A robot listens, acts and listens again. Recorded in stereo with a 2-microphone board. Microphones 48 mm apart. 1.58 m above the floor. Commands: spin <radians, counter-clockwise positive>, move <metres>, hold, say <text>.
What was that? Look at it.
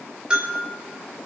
spin -0.35
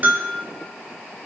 spin -2.44
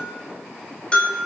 spin 0.44
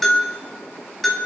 say Facing the bell.